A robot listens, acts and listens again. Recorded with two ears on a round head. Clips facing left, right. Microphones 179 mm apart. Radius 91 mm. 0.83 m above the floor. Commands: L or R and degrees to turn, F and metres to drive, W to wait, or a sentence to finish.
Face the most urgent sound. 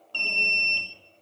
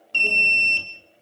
R25
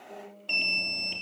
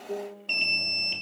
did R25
Facing the alarm, 2 to 4 m away.